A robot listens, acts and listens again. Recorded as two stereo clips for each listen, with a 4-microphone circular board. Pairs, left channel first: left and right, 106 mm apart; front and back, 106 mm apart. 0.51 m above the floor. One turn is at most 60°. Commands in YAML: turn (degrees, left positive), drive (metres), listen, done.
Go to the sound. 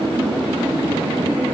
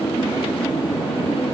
listen: true
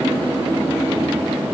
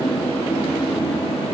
listen: true
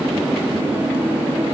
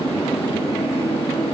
done: "I can't make out anything to turn to."